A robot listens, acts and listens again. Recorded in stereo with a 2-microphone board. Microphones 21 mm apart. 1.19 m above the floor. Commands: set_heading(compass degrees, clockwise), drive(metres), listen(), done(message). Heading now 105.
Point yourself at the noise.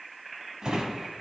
set_heading(150)
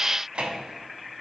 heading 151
set_heading(236)
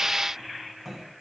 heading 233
done("Found it: a drawer, straight ahead, 2 to 4 m away.")